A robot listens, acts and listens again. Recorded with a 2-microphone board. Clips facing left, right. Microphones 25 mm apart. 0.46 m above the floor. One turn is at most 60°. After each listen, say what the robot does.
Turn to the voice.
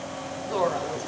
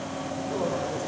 Turn 50° left.
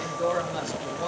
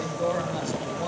Found it: a woman speaking, straight ahead.